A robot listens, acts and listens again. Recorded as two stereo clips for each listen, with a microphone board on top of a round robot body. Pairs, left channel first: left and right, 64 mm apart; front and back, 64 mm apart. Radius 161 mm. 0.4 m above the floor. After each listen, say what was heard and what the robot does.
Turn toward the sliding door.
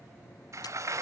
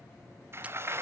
The sliding door: 130° right. Turn 130° right.
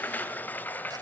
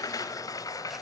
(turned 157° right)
The sliding door is now 25° left. Turn 25° left.
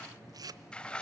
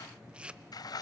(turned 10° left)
The sliding door is now 15° left. Turn 15° left.
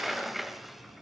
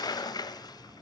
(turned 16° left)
Found it: a sliding door, straight ahead.